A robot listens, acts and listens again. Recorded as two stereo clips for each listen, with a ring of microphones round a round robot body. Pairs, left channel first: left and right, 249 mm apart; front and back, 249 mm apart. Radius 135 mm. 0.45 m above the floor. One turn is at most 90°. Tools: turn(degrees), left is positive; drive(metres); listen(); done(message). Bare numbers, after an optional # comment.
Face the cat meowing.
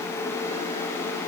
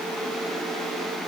listen()
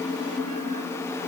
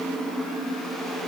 listen()
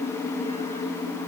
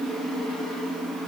done("I can't make out a cat meowing.")